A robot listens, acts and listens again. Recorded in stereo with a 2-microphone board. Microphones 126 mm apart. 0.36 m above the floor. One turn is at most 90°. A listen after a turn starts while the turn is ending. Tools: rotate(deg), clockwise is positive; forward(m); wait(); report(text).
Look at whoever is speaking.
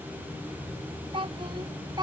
rotate(35)
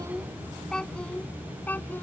rotate(-15)
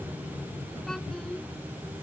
wait()
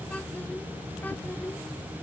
wait()
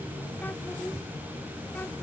report("Facing where the child speaking came from. I can't hear it now.")